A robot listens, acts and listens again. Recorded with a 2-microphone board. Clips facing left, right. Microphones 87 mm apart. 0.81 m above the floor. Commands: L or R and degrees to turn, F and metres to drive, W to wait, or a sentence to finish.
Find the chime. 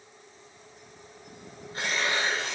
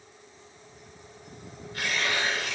W
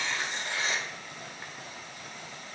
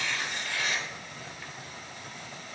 W
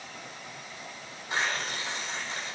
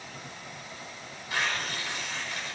I can't make out a chime, only tearing paper.